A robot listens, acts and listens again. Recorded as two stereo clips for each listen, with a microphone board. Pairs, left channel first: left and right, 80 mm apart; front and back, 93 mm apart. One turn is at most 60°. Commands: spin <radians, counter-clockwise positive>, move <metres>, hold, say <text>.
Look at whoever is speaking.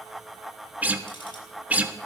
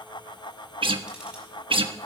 hold
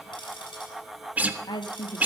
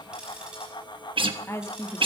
spin 1.05
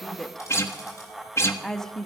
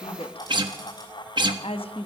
say Facing the woman speaking.